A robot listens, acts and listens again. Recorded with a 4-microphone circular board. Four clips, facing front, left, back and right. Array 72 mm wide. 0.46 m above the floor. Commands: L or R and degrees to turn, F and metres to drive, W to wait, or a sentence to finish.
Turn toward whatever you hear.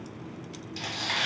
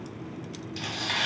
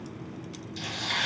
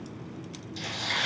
L45
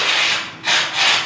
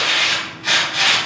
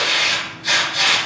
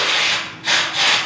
L10
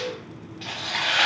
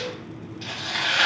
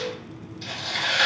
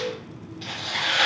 Facing the tearing paper, 1 to 2 m away.